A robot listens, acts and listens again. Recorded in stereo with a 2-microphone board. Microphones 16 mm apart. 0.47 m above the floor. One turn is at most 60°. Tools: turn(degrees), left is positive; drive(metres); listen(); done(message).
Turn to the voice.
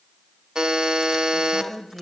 turn(degrees=-45)
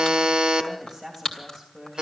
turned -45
done("Facing the woman speaking.")